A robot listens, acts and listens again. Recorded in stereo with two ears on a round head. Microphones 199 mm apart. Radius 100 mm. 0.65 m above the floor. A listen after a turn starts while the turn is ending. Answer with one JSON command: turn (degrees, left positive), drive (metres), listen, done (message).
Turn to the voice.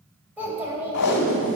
{"turn": -30}
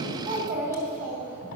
{"turn": -135}
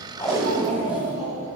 {"turn": -30}
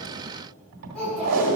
{"done": "Found it: a child speaking, straight ahead."}